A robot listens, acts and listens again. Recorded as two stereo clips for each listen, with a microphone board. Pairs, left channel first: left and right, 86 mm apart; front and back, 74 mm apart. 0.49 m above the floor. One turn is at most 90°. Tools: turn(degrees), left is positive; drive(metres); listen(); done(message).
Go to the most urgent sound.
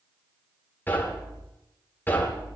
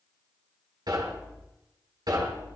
listen()
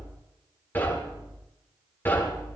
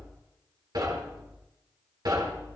listen()
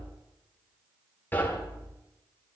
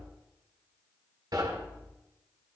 done("I can't make out anything urgent, only knocking.")